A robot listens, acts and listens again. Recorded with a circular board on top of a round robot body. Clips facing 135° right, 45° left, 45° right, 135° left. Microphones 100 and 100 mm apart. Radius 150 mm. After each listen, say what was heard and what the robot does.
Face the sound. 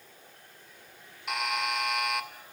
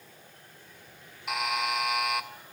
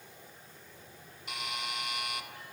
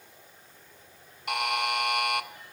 The buzzer: 135° left. Turn 135° left.
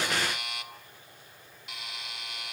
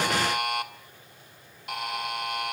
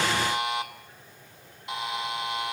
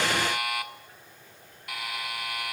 The buzzer is now 20° left. Turn 20° left.
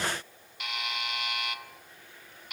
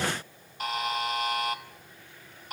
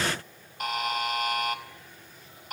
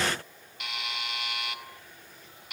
Facing the buzzer.